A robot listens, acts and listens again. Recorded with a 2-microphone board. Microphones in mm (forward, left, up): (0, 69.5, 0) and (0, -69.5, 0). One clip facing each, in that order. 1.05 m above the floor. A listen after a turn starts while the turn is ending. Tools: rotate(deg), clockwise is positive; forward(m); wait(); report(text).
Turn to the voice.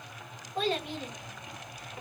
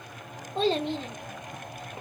rotate(25)
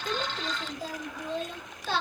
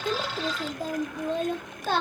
rotate(130)
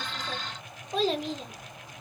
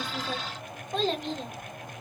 report("Facing the child speaking, under 1 m away.")